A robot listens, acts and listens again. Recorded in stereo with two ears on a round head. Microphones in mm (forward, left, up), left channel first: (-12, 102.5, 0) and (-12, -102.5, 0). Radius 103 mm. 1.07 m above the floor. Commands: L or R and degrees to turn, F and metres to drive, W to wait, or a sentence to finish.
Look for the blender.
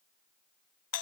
W
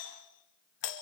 W
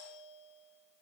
I can't make out a blender, only a doorbell.